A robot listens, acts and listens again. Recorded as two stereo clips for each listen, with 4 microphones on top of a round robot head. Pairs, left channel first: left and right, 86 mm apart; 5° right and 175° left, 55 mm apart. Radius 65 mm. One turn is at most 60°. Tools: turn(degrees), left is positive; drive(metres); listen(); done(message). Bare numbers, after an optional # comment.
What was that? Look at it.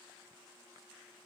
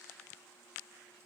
listen()
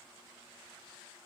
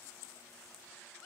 listen()
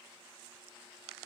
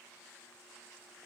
done("I can't make out anything.")